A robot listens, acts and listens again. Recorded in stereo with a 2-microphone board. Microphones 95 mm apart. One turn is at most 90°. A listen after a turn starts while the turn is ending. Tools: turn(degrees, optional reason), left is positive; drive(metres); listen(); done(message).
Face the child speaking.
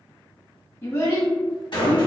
turn(degrees=30, reason="The child speaking: about 30° left or 150° left.")
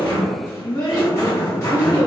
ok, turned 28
turn(degrees=90, reason="So it is at 110° left.")
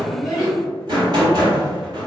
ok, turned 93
turn(degrees=20, reason="Nothing new. It was at 20° left.")
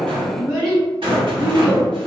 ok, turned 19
done("Facing the child speaking.")